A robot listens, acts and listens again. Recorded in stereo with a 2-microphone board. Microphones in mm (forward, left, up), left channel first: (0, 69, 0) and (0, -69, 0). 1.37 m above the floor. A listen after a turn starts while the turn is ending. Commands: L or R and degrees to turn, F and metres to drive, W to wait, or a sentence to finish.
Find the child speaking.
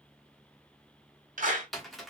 W
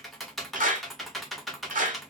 W
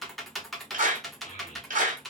L60
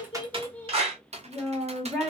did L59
Facing the child speaking, under 1 m away.